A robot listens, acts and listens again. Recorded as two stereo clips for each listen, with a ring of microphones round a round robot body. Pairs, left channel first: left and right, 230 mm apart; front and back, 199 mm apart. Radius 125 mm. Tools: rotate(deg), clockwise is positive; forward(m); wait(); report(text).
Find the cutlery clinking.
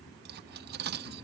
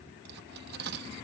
rotate(135)
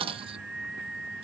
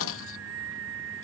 rotate(25)
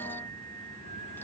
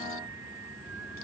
wait()
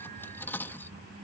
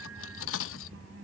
rotate(-10)
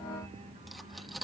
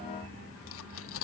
report("Facing the cutlery clinking.")